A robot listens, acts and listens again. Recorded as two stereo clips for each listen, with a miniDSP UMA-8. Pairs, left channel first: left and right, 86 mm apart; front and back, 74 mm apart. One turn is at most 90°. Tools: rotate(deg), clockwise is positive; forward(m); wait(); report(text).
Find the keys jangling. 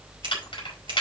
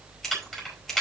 rotate(-85)
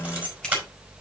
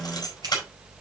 rotate(25)
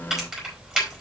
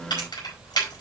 rotate(10)
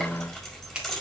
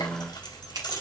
report("Found it: keys jangling, straight ahead.")